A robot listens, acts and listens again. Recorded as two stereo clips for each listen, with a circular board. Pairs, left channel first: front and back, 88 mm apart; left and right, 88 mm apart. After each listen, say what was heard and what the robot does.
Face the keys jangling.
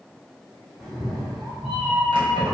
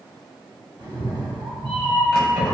The keys jangling: 175° left. Turn 175° left.
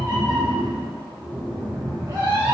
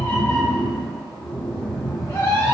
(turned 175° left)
Keep listening.
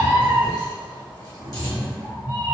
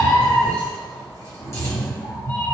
Keep listening.
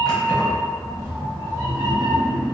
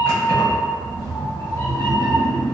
The keys jangling is now 40° left. Turn 40° left.
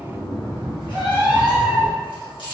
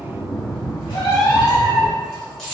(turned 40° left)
The keys jangling is now 10° left. Turn 10° left.
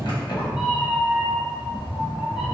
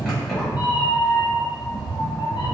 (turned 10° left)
Facing the keys jangling.